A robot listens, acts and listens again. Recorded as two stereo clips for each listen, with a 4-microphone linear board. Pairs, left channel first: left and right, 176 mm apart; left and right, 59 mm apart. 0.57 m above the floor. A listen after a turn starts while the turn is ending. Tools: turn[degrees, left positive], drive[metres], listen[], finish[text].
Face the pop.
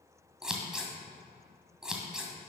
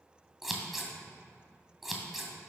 Action: listen[]
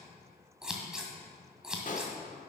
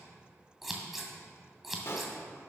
Thought: The pop: about 45° left or 135° left.
Action: turn[45]
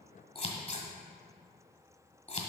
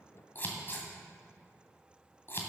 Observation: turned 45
Action: listen[]
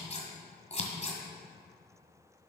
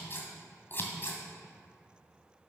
Action: finish[I heard a pop, but can't make it out now. It was about straight ahead or 90° left.]